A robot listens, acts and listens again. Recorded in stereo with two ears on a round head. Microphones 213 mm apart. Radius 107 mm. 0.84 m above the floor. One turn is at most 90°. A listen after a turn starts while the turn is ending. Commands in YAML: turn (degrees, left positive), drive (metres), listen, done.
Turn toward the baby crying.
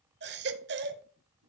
turn: -45
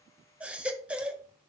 done: "Facing the baby crying."